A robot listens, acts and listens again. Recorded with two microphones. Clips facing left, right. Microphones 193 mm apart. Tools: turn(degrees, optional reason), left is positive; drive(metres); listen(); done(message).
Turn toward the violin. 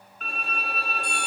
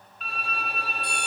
turn(degrees=50, reason="The violin: about 50° left or 130° left.")
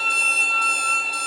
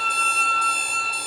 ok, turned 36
turn(degrees=20, reason="So it is at 20° left.")
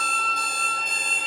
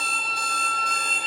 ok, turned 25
done("Found it: a violin, straight ahead.")